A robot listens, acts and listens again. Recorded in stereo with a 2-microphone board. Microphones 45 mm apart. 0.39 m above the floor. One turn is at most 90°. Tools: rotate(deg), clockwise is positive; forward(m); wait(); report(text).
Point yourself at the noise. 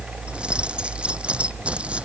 rotate(30)
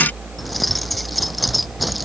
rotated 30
report("Facing the keys jangling.")